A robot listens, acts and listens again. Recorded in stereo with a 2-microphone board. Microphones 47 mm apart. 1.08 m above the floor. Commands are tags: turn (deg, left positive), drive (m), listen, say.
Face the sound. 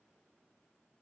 <listen/>
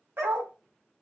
<turn deg="-60"/>
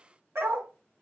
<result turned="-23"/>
<turn deg="-90"/>
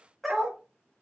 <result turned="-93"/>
<say>Facing the dog barking.</say>